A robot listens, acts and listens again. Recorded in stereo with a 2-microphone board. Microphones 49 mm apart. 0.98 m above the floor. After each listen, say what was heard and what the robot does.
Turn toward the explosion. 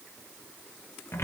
Keep listening.
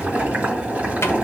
Keep listening.
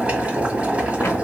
I can't make out an explosion, only boiling and a cupboard door.